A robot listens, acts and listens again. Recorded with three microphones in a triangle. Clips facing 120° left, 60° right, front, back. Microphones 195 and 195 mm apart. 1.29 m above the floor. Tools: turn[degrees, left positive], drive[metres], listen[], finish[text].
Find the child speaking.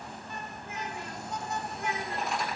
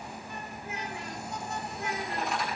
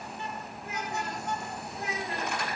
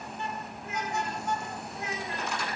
Thought: The child speaking: 55° right.
Action: turn[-55]
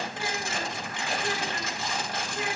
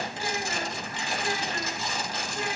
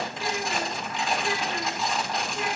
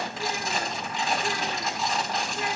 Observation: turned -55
Action: listen[]
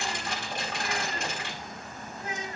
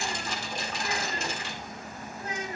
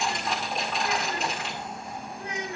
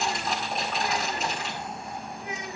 Action: finish[Found it: a child speaking, straight ahead.]